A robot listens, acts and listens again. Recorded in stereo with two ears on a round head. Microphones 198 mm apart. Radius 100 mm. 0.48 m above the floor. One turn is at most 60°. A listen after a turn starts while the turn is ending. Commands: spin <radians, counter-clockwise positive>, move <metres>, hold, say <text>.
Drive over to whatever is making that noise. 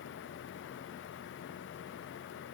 hold
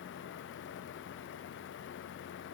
hold
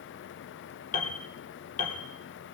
spin 0.61
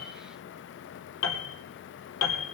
spin 1.05
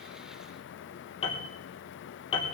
spin 0.44
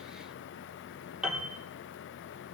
move 1.0
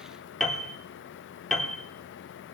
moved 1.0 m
move 1.0
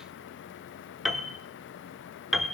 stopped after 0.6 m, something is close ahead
say Arrived at the piano, straight ahead.